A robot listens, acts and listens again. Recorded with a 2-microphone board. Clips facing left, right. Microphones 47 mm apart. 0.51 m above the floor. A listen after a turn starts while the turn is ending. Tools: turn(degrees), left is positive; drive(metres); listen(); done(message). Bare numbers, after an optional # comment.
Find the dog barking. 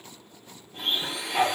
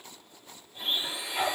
# The dog barking: about 50° left or 130° left.
turn(50)
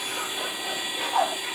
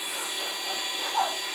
# So it is at 80° left.
turn(80)
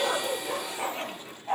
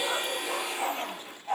done("Found it: a dog barking, straight ahead, over 4 m away.")